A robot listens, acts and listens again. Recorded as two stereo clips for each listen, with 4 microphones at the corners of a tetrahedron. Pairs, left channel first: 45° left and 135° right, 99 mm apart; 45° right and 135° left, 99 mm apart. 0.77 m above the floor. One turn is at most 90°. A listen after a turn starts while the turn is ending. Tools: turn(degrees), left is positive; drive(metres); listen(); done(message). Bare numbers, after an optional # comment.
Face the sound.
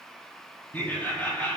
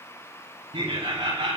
# The laughter: 115° left.
turn(90)
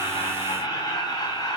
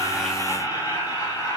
done("Facing the laughter.")